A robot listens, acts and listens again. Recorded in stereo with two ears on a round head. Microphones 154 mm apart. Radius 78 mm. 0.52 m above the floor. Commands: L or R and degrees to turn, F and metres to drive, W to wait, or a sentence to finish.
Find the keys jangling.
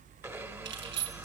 R90
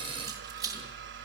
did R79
R20
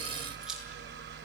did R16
W
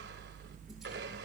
W
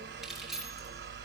Found it: keys jangling, straight ahead, over 4 m away.